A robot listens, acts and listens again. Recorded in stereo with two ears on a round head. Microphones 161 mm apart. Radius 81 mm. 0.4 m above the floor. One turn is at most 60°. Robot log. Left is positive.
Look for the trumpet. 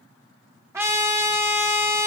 cmd yaw -30
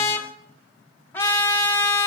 note: So it is at 15° left.
cmd yaw +15
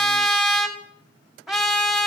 end: Found it: a trumpet, straight ahead, 1 to 2 m away.